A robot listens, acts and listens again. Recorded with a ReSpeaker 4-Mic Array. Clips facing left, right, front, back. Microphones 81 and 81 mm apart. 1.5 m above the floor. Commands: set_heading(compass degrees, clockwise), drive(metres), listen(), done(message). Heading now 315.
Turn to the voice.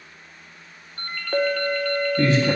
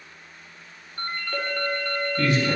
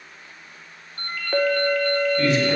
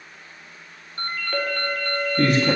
set_heading(175)
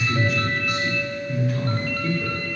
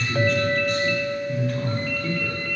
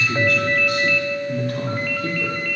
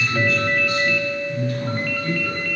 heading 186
done("Facing the man speaking, 2 to 4 m away.")